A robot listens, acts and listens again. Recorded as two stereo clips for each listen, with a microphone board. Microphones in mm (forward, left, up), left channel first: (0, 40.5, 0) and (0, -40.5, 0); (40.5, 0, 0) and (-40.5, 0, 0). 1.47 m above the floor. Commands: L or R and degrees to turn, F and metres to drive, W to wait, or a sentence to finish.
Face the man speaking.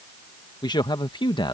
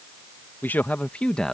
L85
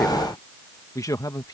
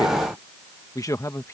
L50
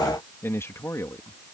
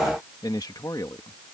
L40
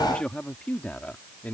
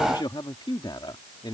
L20
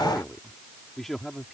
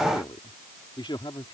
Facing the man speaking.